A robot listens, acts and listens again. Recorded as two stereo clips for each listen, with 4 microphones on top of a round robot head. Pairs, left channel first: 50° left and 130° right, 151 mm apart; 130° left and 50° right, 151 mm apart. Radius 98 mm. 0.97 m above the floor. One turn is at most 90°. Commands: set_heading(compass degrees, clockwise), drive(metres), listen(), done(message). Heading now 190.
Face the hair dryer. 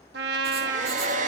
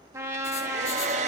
set_heading(280)
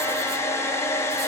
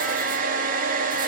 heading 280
set_heading(300)
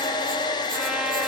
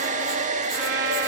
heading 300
set_heading(310)
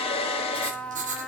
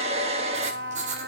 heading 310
done("Found it: a hair dryer, straight ahead.")